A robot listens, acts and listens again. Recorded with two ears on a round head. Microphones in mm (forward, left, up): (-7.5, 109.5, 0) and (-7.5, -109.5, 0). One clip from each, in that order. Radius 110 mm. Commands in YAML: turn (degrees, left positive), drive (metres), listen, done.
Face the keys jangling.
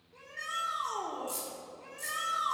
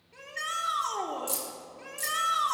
turn: -60
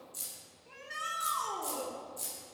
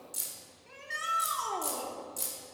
turn: -60
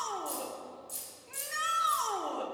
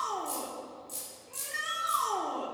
done: "Found it: keys jangling, straight ahead."